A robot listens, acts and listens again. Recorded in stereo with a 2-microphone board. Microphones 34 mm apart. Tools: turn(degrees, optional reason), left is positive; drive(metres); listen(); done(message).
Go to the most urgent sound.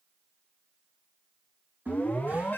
turn(degrees=70, reason="The alarm: about 70° left or 110° left.")
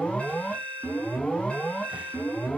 turn(degrees=40, reason="So it is at 40° left.")
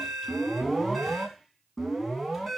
drive(metres=1.0)
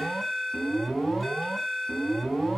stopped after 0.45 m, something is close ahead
done("Something is in my way. I am facing the alarm but have not reached it.")